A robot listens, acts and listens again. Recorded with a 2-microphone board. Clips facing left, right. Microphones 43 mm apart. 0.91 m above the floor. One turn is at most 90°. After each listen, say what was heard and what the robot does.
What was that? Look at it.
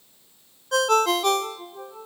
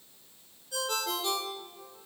Turn 90° left.
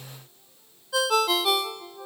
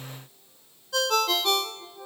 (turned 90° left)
So it is at 10° left. Turn 10° left.
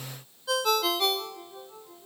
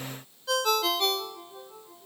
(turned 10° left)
Found it: a ringtone, straight ahead, 1 to 2 m away.